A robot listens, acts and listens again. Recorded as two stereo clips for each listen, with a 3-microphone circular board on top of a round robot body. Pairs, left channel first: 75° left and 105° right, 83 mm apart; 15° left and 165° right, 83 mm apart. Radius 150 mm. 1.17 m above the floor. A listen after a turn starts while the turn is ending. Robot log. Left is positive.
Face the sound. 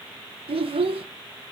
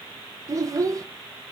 note: The child speaking: 110° right.
cmd yaw -110
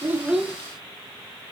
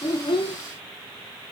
cmd idle
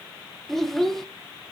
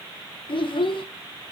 note: The child speaking is now 15° right.
cmd yaw -15
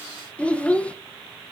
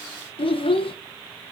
end: Found it: a child speaking, straight ahead, under 1 m away.